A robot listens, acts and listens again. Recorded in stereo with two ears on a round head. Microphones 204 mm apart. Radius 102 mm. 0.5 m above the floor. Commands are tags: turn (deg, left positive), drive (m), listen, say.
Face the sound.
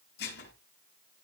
<turn deg="45"/>
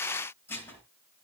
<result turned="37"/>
<turn deg="10"/>
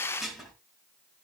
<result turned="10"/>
<say>Facing the dishes clattering.</say>